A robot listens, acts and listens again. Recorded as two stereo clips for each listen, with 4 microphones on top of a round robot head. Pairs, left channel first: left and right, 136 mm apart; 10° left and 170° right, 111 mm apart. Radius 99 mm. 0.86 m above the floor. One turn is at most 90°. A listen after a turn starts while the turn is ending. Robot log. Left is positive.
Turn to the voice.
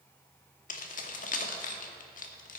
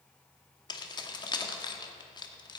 cmd idle
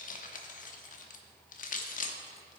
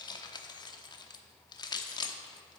cmd idle
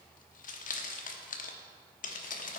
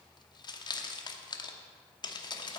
end: I can't make out anyone speaking, only keys jangling.